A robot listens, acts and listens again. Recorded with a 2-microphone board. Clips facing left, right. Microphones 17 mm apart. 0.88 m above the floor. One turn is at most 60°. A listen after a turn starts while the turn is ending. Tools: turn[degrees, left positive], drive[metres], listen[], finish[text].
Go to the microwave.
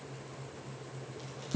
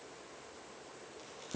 Action: listen[]
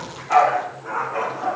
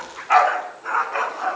Action: listen[]
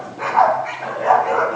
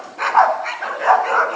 Action: finish[I can't make out a microwave, only a dog barking.]